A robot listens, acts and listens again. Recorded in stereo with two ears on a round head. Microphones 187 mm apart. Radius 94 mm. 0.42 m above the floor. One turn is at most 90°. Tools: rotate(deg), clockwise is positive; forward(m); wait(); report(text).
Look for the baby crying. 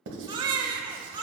rotate(20)
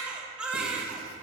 report("Facing the baby crying.")